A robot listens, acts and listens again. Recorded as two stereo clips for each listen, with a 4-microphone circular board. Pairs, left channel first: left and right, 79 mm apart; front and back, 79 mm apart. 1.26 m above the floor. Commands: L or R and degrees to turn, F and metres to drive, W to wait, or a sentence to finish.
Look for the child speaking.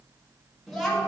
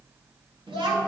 L180
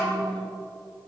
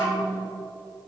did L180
R30
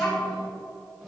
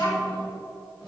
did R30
Found it: a child speaking, straight ahead.